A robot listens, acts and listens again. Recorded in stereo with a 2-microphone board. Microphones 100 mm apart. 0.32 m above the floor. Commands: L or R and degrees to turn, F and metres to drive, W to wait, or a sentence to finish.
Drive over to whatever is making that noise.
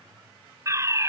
R30
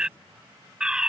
R10
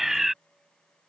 F1.0
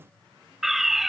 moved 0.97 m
F1.0
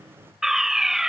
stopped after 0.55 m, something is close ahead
Arrived at the fire alarm, straight ahead.